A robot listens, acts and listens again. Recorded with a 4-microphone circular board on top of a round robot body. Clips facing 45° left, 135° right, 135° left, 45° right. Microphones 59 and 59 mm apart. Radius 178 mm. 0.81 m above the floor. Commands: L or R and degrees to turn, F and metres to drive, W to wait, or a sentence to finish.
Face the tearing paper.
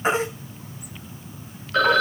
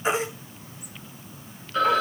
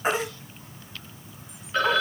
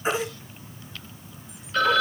W
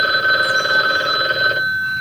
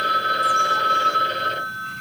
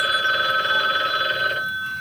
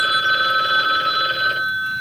W
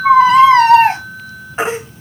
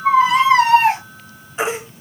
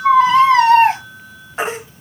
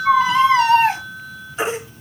I can't make out tearing paper to turn to.